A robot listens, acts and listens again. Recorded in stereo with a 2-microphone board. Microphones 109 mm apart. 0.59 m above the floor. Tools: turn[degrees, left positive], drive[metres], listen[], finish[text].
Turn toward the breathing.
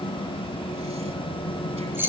Action: listen[]
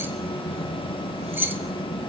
Action: listen[]
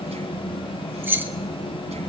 Action: finish[I can't make out breathing to turn to.]